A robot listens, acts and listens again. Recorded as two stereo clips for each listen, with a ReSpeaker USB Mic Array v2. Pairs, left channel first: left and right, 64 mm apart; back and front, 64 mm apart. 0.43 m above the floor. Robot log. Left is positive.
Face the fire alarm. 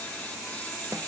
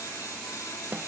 cmd idle
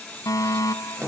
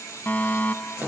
note: The fire alarm: 115° left.
cmd yaw +115
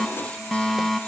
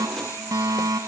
end: Found it: a fire alarm, straight ahead.